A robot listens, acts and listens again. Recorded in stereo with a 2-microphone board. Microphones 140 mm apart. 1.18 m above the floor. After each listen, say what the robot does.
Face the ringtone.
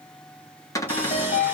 Turn 60° left.
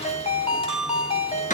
Turn 50° left.
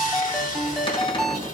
Facing the ringtone.